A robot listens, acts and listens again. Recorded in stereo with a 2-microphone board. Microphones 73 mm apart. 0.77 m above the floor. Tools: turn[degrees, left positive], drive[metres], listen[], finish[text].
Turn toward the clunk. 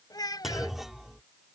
Action: turn[-30]
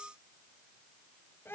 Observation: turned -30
Action: listen[]
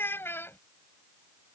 Action: finish[I heard a clunk, but can't make it out now. It was about 25° left or 145° right.]